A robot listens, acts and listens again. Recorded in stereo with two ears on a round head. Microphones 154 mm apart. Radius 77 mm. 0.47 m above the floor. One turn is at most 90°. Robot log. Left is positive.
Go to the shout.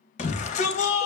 note: The shout: about 45° left or 135° left.
cmd yaw +45
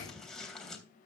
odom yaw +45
cmd fwd 1.0
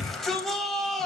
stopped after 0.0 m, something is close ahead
end: Blocked. The shout is further on, straight ahead.